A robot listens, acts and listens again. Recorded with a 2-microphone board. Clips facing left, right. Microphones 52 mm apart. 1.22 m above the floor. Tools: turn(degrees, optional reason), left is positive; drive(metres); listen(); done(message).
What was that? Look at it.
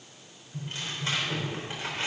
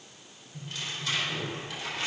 turn(degrees=30, reason="The tearing paper: about 30° left or 150° left.")
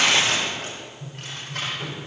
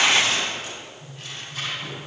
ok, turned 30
turn(degrees=120, reason="So it is at 120° left.")
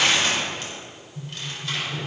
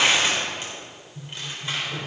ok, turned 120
turn(degrees=-20, reason="The tearing paper is now 20° right.")
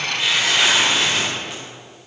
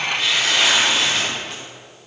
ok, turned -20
done("Found it: tearing paper, straight ahead.")